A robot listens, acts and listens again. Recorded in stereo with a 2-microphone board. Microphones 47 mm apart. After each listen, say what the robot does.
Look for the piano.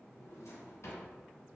Keep listening.
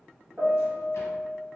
Turn 40° right.
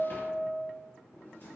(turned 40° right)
Turn 95° right.
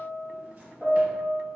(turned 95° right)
Turn 15° right.
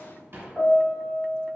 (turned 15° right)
Facing the piano.